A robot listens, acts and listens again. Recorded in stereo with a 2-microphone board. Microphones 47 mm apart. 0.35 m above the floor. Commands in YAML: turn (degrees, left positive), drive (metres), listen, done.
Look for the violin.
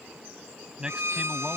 turn: -70
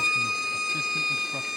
done: "Facing the violin."